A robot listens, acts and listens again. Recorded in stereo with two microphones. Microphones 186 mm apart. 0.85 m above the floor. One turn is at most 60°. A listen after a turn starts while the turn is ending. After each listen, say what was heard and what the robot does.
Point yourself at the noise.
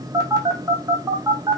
The phone buzzing: about 20° right or 160° right. Turn 20° right.
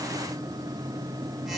Keep listening.
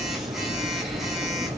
Facing the phone buzzing.